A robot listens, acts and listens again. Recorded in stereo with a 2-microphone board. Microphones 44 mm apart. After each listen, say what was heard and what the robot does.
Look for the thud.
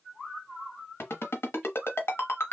Keep listening.
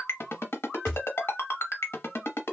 Turn 30° right.
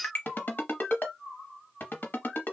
Keep listening.
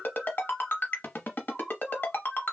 I heard a thud, but can't make it out now. It was about 20° left or 140° right.